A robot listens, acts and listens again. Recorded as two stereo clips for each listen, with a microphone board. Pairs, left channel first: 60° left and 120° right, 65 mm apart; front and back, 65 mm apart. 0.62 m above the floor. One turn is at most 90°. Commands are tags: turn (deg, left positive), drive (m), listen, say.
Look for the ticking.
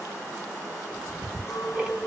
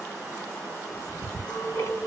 <turn deg="-45"/>
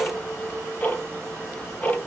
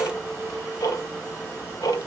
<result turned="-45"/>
<say>Found it: ticking, straight ahead.</say>